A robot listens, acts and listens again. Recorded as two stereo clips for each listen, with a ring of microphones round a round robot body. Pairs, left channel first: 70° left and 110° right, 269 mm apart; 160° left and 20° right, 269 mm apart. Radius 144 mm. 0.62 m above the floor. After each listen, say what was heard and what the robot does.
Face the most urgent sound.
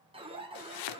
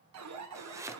The alarm: 45° right. Turn 45° right.
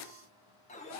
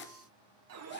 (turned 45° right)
Found it: an alarm, straight ahead, 2 to 4 m away.